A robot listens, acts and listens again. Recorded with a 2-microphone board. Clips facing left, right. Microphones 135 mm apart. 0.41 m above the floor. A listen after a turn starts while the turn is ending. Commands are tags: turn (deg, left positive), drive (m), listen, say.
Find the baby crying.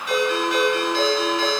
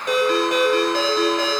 <listen/>
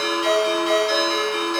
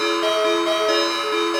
<listen/>
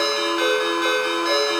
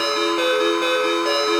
<say>I can't make out a baby crying to turn to.</say>